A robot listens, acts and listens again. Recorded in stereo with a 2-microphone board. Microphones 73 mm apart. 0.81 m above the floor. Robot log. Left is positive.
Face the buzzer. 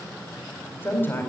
cmd idle
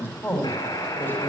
note: The buzzer: about 60° left or 120° left.
cmd yaw +60
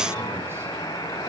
note: So it is at 60° left.
cmd yaw +60
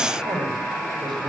end: Facing the buzzer, 2 to 4 m away.